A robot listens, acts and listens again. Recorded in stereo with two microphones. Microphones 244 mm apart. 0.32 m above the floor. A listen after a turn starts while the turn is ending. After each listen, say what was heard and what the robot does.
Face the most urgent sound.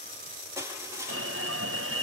The alarm: about 55° right or 125° right. Turn 55° right.
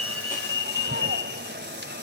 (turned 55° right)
So it is at 55° right. Turn 55° right.
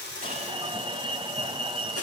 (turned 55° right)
The alarm is now 25° right. Turn 25° right.
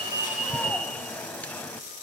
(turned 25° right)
Facing the alarm, 1 to 2 m away.